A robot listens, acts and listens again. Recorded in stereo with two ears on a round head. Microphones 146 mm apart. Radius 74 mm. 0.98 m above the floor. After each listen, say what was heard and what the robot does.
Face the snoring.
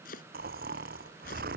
The snoring: about 55° right or 125° right. Turn 55° right.
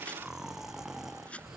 Facing the snoring.